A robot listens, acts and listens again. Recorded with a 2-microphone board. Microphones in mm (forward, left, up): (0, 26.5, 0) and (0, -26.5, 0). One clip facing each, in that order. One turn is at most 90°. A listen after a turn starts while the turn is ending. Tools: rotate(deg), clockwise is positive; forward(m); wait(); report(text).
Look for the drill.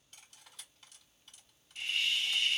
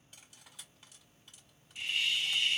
wait()
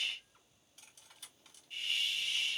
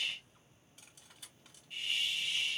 wait()
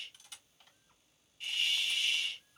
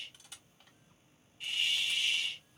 report("I can't make out a drill, only cutlery clinking and a hiss.")